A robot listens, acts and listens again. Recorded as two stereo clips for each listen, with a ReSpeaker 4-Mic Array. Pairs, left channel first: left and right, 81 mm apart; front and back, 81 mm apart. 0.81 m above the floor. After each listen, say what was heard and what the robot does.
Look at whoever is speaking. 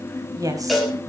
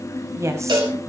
The woman speaking: 130° right. Turn 130° right.
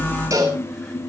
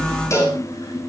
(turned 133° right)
Keep listening.
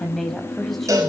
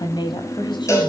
Facing the woman speaking.